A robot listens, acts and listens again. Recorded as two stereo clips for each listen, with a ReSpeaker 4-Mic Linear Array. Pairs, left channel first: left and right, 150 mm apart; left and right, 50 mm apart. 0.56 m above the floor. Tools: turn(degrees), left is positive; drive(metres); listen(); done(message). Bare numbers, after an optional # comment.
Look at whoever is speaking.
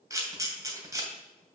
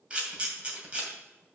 listen()
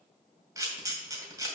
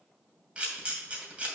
listen()
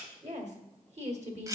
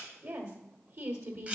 # The woman speaking: about 50° right or 130° right.
turn(-50)
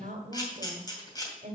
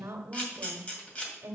# So it is at 75° right.
turn(-75)
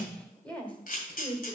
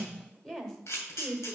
# The woman speaking is now 10° left.
turn(10)
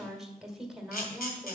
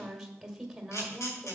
done("Found it: a woman speaking, straight ahead, 1 to 2 m away.")